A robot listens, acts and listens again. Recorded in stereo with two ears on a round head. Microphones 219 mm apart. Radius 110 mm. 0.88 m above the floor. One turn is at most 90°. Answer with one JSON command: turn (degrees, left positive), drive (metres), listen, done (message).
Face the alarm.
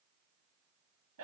{"listen": true}
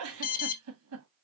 {"turn": 40}
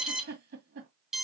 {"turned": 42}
{"done": "Found it: an alarm, straight ahead, under 1 m away."}